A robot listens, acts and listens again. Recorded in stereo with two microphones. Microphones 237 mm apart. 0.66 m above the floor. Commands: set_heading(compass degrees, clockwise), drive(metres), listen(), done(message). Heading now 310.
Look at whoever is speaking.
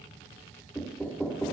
listen()
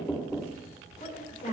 set_heading(275)
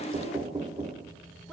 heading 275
listen()
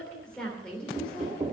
done("Facing the woman speaking.")